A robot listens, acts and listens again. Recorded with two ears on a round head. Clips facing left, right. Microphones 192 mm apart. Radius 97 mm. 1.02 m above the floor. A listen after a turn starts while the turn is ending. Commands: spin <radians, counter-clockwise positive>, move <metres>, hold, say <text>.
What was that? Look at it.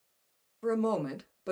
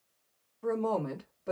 spin 0.79
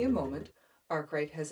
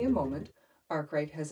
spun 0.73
say Found it: a woman speaking, straight ahead.